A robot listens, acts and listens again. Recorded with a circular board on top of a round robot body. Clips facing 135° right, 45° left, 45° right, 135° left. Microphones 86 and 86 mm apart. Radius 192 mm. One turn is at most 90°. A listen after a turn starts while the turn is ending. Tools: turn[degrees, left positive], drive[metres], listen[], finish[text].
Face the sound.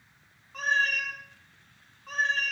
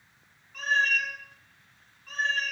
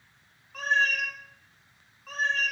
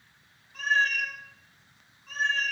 Thought: The cat meowing: 85° right.
Action: turn[-85]
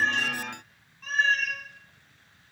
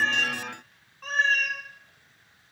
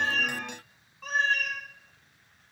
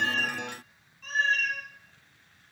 Thought: The cat meowing is now 10° right.
Action: turn[-10]
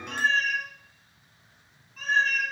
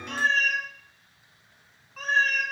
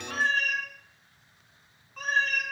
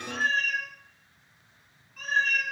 Action: finish[Found it: a cat meowing, straight ahead.]